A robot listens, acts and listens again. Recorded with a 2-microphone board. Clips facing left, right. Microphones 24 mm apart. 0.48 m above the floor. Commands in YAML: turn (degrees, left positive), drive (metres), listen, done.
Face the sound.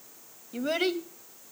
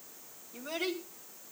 turn: 60
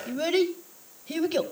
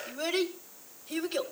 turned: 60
turn: 25
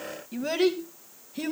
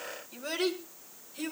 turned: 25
turn: 25
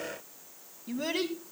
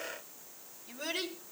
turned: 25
turn: 15
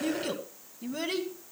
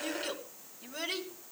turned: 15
done: "Found it: a child speaking, straight ahead, 2 to 4 m away."